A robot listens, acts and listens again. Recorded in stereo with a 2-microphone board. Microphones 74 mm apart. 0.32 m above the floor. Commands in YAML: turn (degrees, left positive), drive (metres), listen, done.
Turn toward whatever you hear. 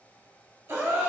turn: -40
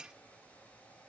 listen: true
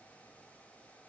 done: "I heard a gasp, but can't make it out now. It was about straight ahead or 100° right."